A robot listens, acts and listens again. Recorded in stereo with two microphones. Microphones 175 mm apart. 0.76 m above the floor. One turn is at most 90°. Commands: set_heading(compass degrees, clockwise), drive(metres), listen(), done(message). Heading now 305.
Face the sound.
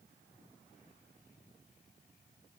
listen()
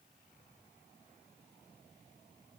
listen()
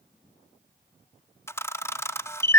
set_heading(275)
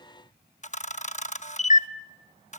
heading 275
set_heading(185)
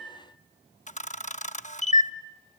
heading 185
set_heading(140)
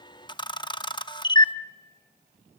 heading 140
set_heading(115)
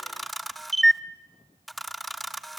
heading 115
done("Found it: a camera shutter, straight ahead, under 1 m away.")